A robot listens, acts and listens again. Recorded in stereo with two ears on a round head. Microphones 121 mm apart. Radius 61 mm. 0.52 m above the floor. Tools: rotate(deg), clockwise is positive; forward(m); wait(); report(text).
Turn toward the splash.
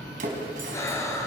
rotate(70)
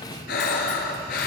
wait()
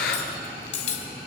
report("I heard a splash, but can't make it out now. It was about straight ahead or 40° right.")